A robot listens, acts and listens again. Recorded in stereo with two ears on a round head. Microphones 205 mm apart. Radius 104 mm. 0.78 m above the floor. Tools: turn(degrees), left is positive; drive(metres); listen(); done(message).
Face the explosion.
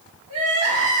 listen()
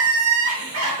listen()
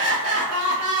done("I can't make out an explosion, only crying.")